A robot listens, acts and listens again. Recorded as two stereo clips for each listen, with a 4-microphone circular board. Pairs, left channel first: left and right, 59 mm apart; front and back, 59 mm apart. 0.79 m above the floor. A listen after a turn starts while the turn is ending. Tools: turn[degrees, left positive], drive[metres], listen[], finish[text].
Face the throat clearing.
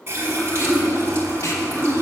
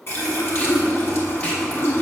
Thought: The throat clearing: 15° left.
Action: turn[15]
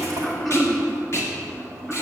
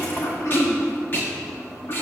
Action: finish[Found it: throat clearing, straight ahead.]